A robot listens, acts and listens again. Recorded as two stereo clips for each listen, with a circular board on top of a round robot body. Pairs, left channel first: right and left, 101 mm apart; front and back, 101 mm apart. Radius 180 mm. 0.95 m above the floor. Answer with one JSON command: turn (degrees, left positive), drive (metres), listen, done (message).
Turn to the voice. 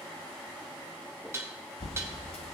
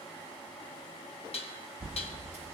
{"listen": true}
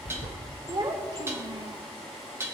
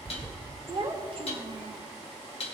{"turn": 140}
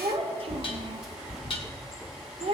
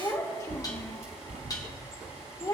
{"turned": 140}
{"turn": 60}
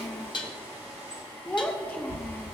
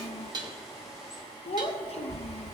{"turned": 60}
{"turn": -15}
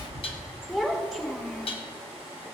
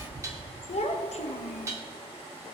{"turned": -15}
{"done": "Facing the child speaking."}